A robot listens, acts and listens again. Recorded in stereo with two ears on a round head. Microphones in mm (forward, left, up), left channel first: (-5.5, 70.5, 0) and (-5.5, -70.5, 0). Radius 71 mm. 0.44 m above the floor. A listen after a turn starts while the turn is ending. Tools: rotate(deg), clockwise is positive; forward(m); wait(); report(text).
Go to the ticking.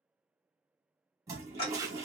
rotate(-30)
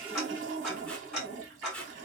forward(1.0)
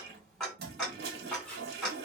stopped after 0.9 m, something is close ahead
rotate(-10)
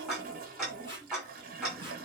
report("I am next to the ticking.")